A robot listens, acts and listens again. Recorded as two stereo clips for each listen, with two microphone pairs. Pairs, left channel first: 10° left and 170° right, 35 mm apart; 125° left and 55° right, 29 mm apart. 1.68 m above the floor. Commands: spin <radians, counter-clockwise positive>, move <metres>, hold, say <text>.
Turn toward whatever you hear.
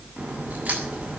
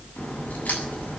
spin 2.71
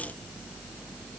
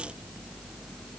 say Facing where the crack came from. I can't hear it now.